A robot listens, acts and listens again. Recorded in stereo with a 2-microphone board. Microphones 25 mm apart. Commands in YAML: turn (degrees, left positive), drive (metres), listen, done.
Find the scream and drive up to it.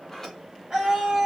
turn: -35
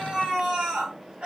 turn: -110
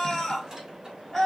turn: 25
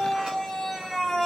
turn: 15
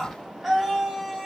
drive: 1.0
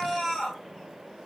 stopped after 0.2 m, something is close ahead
done: "Blocked. The scream is further on, straight ahead."